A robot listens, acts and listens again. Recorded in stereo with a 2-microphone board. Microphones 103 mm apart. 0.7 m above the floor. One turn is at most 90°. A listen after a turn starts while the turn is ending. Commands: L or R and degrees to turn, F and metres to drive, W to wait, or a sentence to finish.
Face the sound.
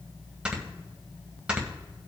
R30
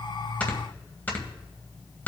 L20
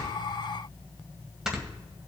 Found it: snoring, straight ahead.